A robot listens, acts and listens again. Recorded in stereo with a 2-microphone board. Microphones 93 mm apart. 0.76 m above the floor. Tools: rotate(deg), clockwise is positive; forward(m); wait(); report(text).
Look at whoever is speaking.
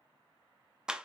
wait()
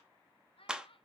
rotate(-70)
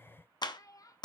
rotate(-40)
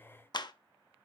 wait()
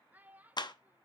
rotate(20)
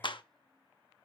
wait()
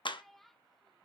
report("Facing the child speaking, under 1 m away.")